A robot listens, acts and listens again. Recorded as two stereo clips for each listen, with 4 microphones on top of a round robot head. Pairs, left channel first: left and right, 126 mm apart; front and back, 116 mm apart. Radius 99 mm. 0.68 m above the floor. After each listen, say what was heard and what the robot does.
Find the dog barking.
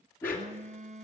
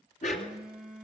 The dog barking: 10° left. Turn 10° left.
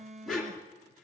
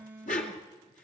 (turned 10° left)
Facing the dog barking, 2 to 4 m away.